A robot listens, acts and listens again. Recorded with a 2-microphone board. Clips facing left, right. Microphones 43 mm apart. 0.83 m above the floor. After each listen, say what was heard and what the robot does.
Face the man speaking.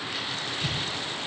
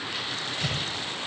Keep listening.
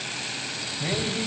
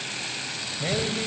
The man speaking: about 25° right or 155° right. Turn 25° right.
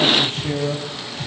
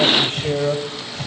So it is at 130° right. Turn 130° right.
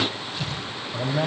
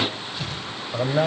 The man speaking is now 40° right. Turn 40° right.
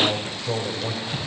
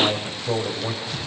The man speaking is now 10° right. Turn 10° right.
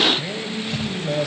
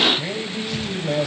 Found it: a man speaking, straight ahead.